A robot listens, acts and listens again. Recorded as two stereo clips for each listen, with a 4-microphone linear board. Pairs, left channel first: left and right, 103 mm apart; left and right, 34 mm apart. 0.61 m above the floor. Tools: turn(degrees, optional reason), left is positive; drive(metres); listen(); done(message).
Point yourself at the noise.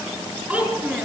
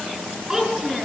turn(degrees=-30)
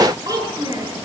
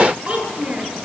turn(degrees=-145, reason="So it is at 145° right.")
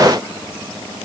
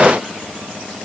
listen()
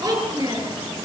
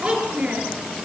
turn(degrees=-40, reason="The child speaking is now 40° right.")
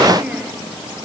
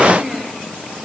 turn(degrees=-10, reason="The child speaking is now 10° right.")
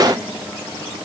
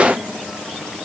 listen()
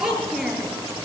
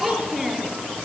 done("Facing the child speaking.")